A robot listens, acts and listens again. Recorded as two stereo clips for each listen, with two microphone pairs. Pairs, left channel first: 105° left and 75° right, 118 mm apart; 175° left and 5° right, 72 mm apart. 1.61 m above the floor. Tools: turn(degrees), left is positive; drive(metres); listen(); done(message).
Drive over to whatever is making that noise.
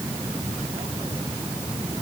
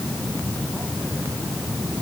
listen()
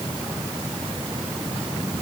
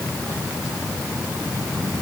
listen()
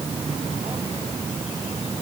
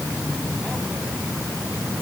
done("I can't make out anything to turn to.")